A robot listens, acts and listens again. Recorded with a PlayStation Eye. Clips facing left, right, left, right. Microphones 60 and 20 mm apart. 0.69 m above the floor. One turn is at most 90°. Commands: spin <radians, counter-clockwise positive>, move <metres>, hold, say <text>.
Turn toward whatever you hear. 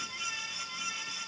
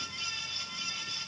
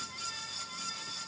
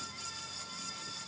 hold
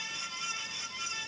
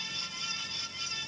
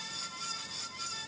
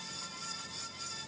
hold
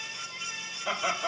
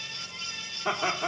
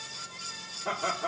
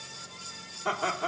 spin -0.70
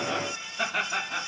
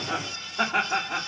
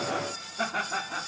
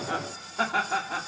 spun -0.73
spin -1.57
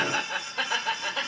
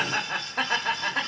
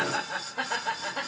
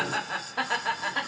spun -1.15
spin -0.87
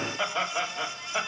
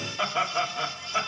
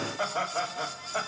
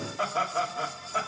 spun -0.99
say Facing the laughter.